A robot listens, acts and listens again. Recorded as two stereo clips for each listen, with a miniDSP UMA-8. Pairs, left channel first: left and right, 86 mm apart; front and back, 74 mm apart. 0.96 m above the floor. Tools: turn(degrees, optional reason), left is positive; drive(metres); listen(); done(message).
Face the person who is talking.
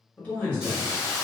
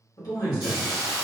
turn(degrees=20, reason="The man speaking: 20° left.")
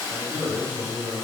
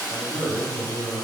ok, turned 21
done("Facing the man speaking, 1 to 2 m away.")